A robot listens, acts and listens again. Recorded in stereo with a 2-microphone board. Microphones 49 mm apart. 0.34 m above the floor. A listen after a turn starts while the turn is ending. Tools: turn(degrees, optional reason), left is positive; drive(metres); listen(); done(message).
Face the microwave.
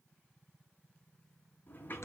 listen()
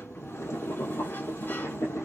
listen()
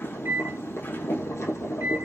turn(degrees=-65, reason="The microwave: about 65° right or 115° right.")
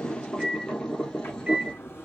turn(degrees=-30, reason="So it is at 30° right.")
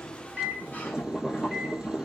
done("Found it: a microwave, straight ahead.")